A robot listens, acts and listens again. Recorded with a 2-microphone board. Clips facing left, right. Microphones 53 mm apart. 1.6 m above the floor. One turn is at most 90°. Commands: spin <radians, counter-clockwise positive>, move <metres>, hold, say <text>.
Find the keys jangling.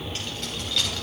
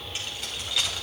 spin -0.52
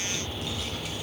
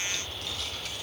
hold
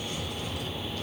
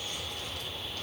hold
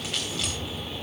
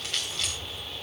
say Facing the keys jangling, over 4 m away.